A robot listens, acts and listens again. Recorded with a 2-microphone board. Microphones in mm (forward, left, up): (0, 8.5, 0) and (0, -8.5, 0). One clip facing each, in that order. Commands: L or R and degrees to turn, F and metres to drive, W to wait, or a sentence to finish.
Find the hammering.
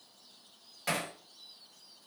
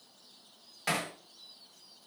R30
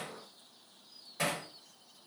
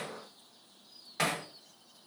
R140
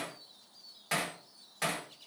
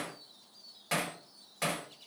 Facing the hammering, 2 to 4 m away.